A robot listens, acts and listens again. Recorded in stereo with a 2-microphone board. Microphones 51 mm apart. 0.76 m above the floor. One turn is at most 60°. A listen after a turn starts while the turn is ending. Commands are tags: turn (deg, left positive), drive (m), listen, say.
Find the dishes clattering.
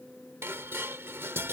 <turn deg="-50"/>
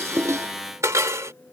<turn deg="-60"/>
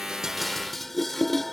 <say>Facing the dishes clattering.</say>